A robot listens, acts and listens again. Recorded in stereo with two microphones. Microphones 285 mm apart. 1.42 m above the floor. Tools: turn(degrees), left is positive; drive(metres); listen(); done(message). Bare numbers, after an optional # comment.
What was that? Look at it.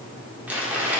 turn(-30)
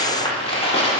# So it is at 20° left.
turn(20)
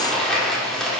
done("Facing the crumpling.")